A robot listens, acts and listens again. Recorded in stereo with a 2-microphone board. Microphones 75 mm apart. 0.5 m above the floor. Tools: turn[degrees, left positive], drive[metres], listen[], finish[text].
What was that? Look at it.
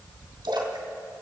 Action: turn[-90]
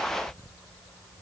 Action: finish[I heard a splash from this way, but can't make it out now.]